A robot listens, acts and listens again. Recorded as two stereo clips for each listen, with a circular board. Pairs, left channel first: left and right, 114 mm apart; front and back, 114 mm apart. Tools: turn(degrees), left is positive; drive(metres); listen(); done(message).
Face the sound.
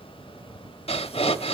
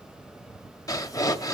turn(degrees=60)
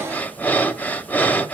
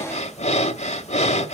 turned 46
turn(degrees=15)
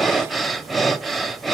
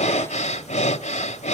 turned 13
done("Facing the breathing, 1 to 2 m away.")